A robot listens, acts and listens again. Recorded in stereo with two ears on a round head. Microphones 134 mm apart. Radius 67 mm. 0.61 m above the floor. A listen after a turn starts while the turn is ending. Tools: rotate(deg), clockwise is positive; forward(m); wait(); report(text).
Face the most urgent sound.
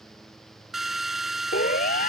rotate(-55)
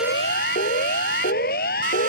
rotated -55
rotate(-65)
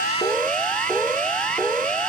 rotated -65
report("Facing the siren.")